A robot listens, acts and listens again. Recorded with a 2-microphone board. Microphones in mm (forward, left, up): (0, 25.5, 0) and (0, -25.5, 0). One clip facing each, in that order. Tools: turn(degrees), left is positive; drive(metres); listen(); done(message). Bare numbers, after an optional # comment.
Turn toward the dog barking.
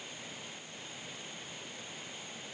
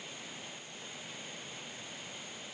listen()
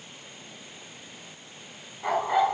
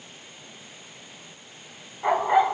# The dog barking: about 20° right or 160° right.
turn(-20)
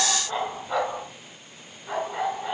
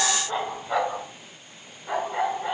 turn(-30)
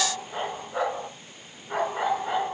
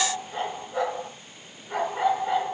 # So it is at 25° left.
turn(25)
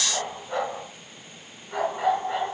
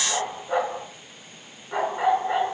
# The dog barking is now 15° right.
turn(-15)
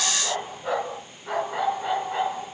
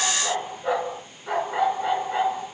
done("Facing the dog barking, over 4 m away.")